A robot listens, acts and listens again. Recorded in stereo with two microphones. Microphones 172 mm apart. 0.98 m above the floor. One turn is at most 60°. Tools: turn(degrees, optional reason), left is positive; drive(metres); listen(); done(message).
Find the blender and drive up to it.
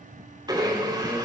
turn(degrees=-25, reason="The blender: about 25° right or 155° right.")
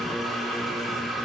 drive(metres=1.0)
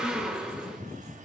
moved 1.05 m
drive(metres=1.0)
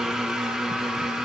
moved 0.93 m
drive(metres=1.0)
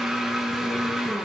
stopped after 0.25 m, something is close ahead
done("Arrived at the blender, straight ahead.")